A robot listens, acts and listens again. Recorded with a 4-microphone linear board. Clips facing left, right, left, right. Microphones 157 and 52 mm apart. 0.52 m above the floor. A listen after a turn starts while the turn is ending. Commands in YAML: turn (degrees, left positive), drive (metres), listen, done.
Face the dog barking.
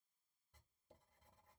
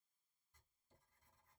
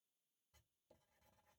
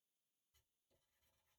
listen: true
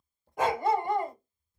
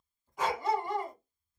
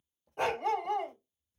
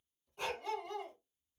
turn: 55
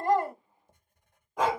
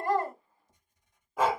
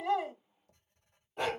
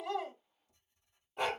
done: "Facing the dog barking."